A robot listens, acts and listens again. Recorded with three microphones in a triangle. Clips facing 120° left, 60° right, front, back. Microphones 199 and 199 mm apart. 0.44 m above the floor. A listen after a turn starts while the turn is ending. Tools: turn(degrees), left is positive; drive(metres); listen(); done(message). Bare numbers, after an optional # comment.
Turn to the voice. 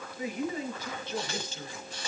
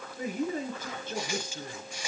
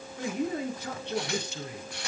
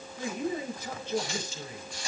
# The man speaking: 20° right.
turn(-20)
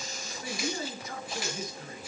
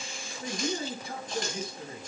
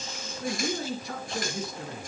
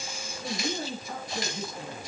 done("Facing the man speaking, over 4 m away.")